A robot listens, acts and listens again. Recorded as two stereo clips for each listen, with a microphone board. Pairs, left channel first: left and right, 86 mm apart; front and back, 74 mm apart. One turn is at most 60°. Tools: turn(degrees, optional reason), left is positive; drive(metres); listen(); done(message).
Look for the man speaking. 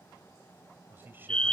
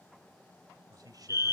turn(degrees=-60, reason="The man speaking: 155° right.")
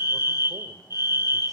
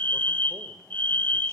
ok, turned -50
turn(degrees=-60, reason="Nothing new. It was at 105° right.")
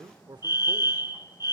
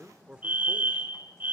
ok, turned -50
turn(degrees=-60, reason="The man speaking is now 110° right.")
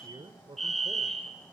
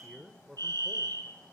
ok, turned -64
turn(degrees=-60, reason="The man speaking is now 100° right.")
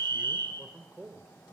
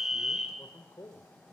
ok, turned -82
turn(degrees=-15, reason="The man speaking is now 15° right.")
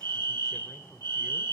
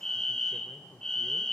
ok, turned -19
listen()
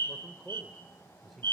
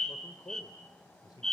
done("Facing the man speaking.")